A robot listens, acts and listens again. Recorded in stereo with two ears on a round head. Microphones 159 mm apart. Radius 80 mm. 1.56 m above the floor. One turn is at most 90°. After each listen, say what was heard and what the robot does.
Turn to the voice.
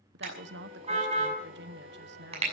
The woman speaking: about 65° right or 115° right. Turn 65° right.
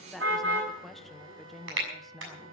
Facing the woman speaking.